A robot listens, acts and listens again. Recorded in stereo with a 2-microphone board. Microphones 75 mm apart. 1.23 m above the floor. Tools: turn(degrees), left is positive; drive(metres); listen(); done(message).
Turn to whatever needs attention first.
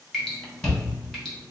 turn(degrees=35)
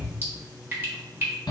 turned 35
turn(degrees=105)
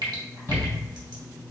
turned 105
turn(degrees=30)
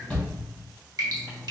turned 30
turn(degrees=10)
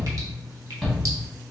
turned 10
done("Facing the shout, 1 to 2 m away.")